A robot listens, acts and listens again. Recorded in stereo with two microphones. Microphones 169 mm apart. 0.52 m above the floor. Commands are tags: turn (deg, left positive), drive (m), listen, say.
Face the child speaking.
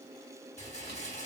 <listen/>
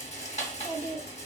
<turn deg="-45"/>
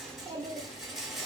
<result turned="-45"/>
<turn deg="-30"/>
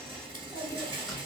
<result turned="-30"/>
<turn deg="15"/>
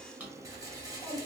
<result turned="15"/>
<turn deg="35"/>
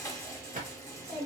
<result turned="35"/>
<say>Facing the child speaking.</say>